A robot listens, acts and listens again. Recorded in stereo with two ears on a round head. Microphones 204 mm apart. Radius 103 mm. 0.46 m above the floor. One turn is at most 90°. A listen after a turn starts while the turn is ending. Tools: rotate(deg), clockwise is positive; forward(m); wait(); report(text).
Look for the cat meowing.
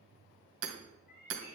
rotate(-45)
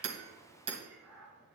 rotate(10)
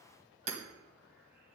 wait()
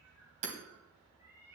rotate(10)
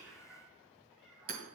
report("Found it: a cat meowing, straight ahead, over 4 m away.")